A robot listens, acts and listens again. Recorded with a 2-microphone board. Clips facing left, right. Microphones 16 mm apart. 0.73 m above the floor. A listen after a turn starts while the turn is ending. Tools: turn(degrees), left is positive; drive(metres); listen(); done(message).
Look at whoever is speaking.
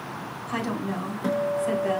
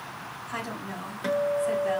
turn(degrees=30)
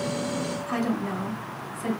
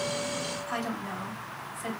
done("Facing the woman speaking.")